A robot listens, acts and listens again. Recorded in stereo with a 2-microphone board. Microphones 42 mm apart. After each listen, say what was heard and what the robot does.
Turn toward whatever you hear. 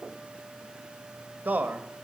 The man speaking: about 40° right or 140° right. Turn 40° right.
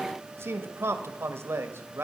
So it is at 100° right. Turn 100° right.
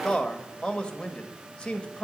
The man speaking is now 25° left. Turn 25° left.
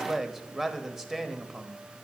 Facing the man speaking, 1 to 2 m away.